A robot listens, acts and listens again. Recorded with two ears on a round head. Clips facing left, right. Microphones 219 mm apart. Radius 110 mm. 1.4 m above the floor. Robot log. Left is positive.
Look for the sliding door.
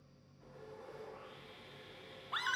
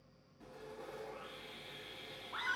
cmd idle
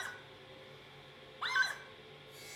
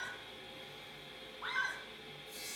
cmd idle
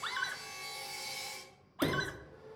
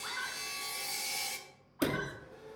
cmd yaw -30
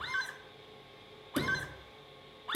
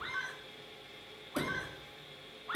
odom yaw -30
note: So it is at 20° left.
cmd yaw +20
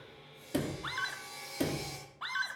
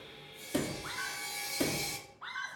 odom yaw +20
end: Facing the sliding door, 1 to 2 m away.